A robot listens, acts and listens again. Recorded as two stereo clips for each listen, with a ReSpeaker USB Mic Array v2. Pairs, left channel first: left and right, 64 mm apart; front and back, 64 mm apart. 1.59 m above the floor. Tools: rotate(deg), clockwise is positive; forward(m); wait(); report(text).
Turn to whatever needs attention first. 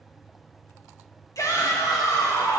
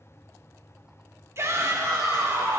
rotate(-130)
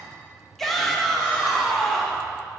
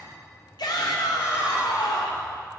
report("Facing the shout.")